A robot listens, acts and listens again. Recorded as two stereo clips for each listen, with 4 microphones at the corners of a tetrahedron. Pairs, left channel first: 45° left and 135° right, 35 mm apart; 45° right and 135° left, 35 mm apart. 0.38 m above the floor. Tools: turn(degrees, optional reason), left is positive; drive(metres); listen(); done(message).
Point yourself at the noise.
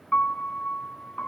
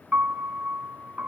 turn(degrees=90, reason="The piano: 90° left.")
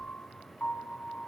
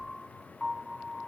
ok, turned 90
turn(degrees=25, reason="The piano is now 25° left.")
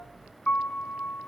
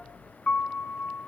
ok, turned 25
done("Facing the piano.")